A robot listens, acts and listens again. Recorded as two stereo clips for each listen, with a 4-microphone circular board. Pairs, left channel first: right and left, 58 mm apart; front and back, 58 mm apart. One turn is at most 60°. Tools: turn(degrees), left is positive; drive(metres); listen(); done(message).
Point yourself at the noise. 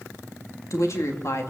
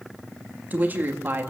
turn(degrees=-60)
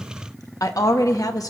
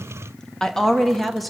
turn(degrees=-60)
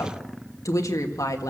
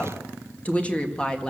turn(degrees=-60)
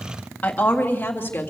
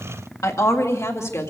turn(degrees=-35)
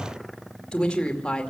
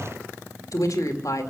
turn(degrees=-15)
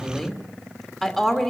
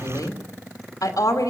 done("Facing the woman speaking.")